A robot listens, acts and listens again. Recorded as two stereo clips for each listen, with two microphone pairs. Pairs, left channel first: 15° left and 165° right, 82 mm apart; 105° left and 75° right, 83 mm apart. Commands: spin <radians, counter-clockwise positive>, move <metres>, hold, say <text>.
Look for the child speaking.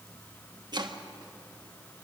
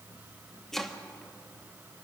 hold
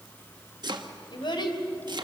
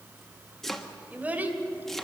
spin -0.17
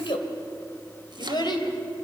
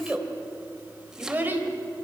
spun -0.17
spin -0.17
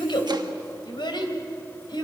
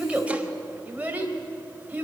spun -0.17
spin -0.17
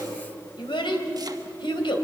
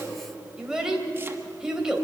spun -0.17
say Facing the child speaking, 2 to 4 m away.